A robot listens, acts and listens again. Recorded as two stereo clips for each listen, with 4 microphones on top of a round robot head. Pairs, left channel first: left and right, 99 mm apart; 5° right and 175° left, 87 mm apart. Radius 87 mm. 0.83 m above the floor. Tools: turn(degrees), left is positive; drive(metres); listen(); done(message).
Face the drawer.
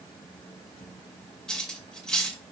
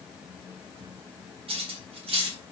listen()
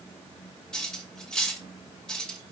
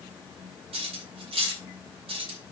listen()
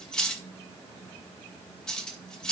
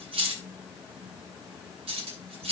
done("I can't make out a drawer, only cutlery clinking.")